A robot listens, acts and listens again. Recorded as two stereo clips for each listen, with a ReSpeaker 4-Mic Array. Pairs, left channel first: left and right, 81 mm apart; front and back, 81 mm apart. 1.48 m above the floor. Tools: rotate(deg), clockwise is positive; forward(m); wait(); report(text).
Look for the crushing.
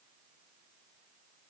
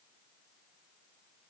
wait()
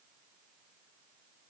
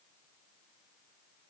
wait()
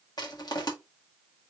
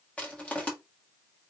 rotate(-70)
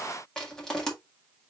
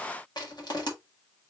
rotate(-10)
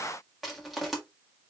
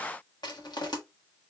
report("Found it: crushing, straight ahead.")